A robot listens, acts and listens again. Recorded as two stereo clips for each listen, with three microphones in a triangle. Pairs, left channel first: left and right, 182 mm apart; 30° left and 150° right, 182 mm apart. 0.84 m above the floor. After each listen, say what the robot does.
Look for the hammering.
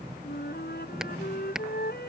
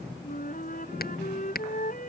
Facing the hammering.